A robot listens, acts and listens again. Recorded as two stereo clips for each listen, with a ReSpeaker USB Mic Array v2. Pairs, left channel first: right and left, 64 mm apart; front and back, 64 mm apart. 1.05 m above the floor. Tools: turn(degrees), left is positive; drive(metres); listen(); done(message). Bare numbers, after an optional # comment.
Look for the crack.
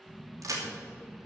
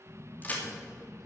# The crack: 60° left.
turn(60)
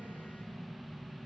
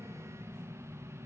done("I heard a crack from this way, but can't make it out now.")